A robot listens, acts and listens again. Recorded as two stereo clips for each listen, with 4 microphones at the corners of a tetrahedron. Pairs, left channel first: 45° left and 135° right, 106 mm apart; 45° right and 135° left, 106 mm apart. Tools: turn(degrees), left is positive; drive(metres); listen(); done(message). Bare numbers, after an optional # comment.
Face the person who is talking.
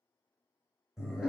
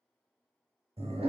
listen()
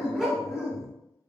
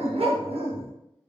listen()
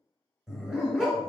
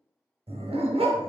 done("I can't make out anyone speaking to turn to.")